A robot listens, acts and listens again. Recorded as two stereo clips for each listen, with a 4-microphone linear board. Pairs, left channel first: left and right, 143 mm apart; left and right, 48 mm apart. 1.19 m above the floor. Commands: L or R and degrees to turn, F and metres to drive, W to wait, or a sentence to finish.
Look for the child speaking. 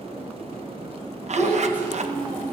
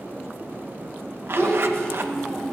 L30
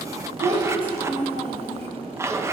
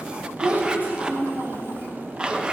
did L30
R45
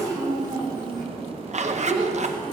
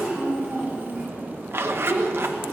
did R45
R35
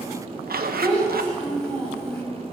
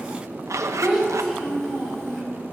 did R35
Found it: a child speaking, straight ahead.